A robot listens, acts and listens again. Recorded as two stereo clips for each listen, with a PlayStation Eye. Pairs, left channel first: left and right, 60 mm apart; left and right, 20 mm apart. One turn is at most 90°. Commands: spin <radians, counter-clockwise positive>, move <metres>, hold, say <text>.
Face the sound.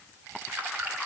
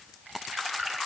spin -0.52
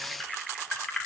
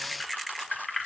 spin 0.17
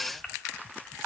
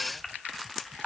say Facing the keys jangling, 1 to 2 m away.